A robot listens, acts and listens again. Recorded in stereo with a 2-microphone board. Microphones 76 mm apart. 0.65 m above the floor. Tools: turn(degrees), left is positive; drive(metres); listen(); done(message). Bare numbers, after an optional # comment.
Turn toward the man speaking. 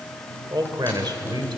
# The man speaking: about 75° right or 105° right.
turn(-75)
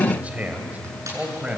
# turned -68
# So it is at 20° right.
turn(-20)
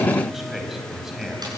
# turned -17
done("Facing the man speaking.")